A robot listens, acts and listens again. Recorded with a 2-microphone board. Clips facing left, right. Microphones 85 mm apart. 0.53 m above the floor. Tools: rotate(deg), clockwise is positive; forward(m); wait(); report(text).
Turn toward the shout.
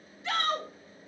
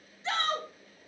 rotate(25)
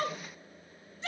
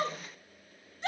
rotate(125)
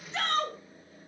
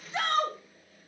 rotate(15)
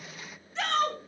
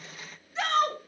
report("Facing the shout, 2 to 4 m away.")